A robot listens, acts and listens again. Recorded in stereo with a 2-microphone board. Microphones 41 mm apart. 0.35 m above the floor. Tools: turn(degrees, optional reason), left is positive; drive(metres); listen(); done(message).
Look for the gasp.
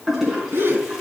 turn(degrees=-70, reason="The gasp: about 70° right or 110° right.")
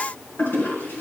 listen()
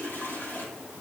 done("I heard a gasp, but can't make it out now. It was about straight ahead or 40° right.")